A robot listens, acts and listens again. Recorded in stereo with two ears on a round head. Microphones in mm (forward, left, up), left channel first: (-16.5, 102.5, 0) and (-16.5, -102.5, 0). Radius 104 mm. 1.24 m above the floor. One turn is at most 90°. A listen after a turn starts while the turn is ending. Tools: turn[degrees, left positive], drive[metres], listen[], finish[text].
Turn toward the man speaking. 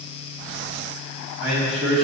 Thought: The man speaking: about 50° right or 130° right.
Action: turn[-50]
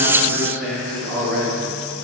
Thought: So it is at 10° left.
Action: turn[10]
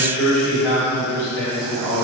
Thought: The man speaking is now 15° left.
Action: turn[15]
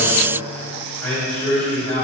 Action: finish[Found it: a man speaking, straight ahead, over 4 m away.]